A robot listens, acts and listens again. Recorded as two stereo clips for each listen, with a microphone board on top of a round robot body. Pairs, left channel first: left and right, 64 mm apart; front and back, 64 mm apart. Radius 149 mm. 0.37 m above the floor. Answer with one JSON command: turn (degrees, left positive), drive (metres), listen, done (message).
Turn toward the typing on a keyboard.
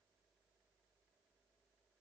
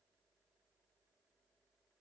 {"listen": true}
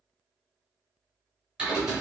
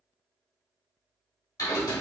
{"turn": -10}
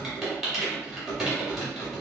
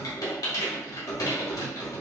{"done": "Facing the typing on a keyboard, 1 to 2 m away."}